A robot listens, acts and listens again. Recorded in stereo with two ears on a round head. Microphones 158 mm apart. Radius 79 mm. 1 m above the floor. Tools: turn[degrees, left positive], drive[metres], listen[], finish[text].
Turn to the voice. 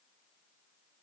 Action: listen[]
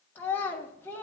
Action: turn[30]
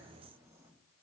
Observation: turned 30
Action: listen[]
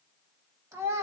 Thought: So it is at 15° right.
Action: turn[-15]
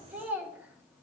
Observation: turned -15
Thought: The child speaking is now 10° right.
Action: turn[-10]
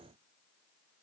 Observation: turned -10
Action: listen[]
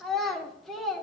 Action: finish[Facing the child speaking.]